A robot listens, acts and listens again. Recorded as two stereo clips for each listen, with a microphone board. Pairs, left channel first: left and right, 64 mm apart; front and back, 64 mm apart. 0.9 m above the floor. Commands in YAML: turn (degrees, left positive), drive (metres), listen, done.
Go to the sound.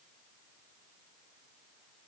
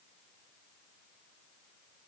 listen: true
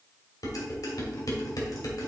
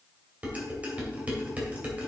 turn: 110
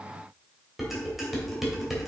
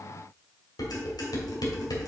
drive: 1.0
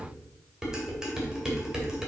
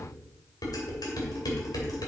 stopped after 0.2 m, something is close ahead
turn: -10
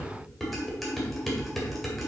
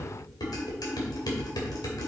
done: "Something is in my way. I am facing the dishes clattering but have not reached it."